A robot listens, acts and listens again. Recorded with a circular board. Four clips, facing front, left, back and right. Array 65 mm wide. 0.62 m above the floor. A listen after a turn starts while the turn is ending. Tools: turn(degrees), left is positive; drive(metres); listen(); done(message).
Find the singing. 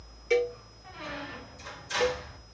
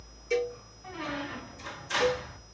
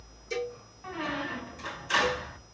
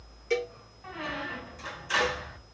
listen()
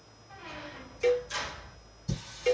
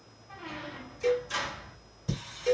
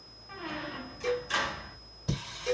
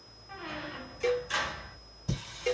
turn(degrees=175)
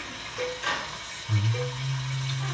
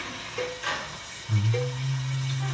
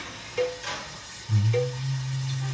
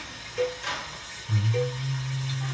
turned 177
done("Facing the singing.")